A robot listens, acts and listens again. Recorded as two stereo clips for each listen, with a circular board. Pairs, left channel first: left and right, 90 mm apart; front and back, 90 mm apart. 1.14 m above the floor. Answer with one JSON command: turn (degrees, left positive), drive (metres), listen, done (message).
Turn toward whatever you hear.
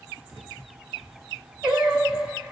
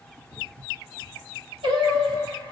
{"turn": -165}
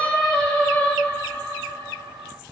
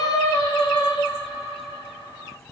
{"turn": 25}
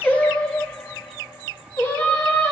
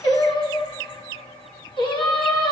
{"turn": 30}
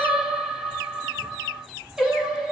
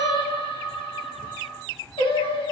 {"done": "Facing the singing, 1 to 2 m away."}